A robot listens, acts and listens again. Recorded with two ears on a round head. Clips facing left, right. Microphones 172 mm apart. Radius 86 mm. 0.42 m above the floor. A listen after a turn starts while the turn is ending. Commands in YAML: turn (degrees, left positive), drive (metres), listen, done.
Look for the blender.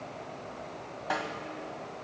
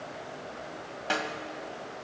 listen: true
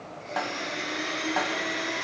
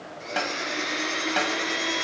turn: -90
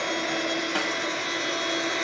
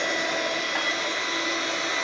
turn: 10
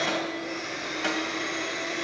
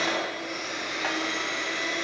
done: "Facing the blender, 2 to 4 m away."